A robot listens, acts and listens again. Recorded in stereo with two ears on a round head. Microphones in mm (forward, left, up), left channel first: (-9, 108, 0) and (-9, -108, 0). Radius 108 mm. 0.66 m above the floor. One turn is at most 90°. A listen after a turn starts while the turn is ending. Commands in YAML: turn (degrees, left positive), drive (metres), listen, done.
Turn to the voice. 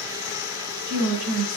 turn: -90
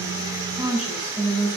done: "Found it: a woman speaking, straight ahead."